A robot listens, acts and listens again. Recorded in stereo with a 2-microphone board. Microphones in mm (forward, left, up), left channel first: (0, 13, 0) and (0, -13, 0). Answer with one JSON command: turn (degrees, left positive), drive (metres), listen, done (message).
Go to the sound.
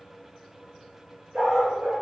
{"turn": -90}
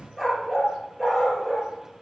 {"drive": 1.0}
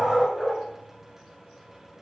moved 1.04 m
{"turn": -10}
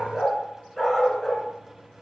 {"drive": 1.0}
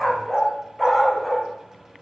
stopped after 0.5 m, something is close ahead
{"done": "I am next to the dog barking."}